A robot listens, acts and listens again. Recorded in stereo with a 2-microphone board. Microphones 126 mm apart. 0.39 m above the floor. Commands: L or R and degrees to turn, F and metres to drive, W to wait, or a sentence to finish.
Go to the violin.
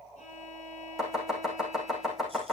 L90
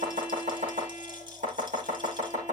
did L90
R15
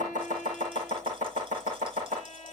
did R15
F1.0
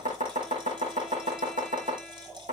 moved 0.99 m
W
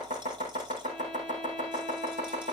W
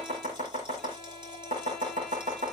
I heard a violin from this way, but can't make it out now. I did not reach it.